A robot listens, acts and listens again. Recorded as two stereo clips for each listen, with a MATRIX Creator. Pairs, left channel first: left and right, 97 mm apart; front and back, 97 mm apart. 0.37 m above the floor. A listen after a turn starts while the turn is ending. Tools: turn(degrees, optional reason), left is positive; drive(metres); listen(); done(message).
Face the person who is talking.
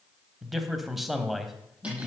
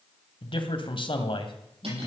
done("Facing the man speaking.")